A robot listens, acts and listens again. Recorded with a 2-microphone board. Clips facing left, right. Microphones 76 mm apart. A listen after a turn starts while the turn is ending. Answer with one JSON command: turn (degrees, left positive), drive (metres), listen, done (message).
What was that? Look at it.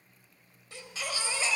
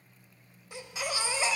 {"turn": -20}
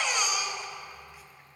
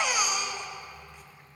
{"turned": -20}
{"done": "Found it: a baby crying, straight ahead, under 1 m away."}